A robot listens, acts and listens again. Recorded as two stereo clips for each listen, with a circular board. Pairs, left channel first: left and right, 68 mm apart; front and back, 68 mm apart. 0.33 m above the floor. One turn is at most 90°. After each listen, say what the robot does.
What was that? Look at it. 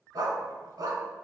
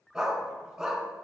Turn 90° right.
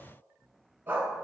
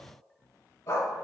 Turn 30° right.
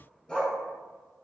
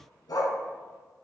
Turn 15° left.
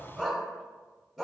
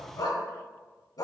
Facing the dog barking.